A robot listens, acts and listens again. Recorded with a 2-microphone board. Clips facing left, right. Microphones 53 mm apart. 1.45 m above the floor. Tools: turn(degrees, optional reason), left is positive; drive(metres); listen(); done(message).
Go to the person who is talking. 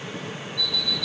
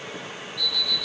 listen()
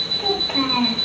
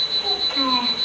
turn(degrees=55, reason="The child speaking: about 55° left or 125° left.")
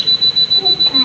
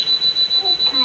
listen()
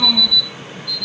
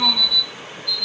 listen()
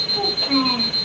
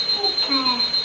drive(metres=1.0)
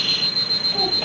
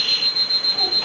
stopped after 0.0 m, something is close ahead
listen()
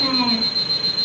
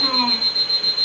turn(degrees=10, reason="The child speaking is now 10° left.")
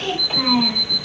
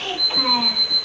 done("Blocked. The child speaking is further on, straight ahead.")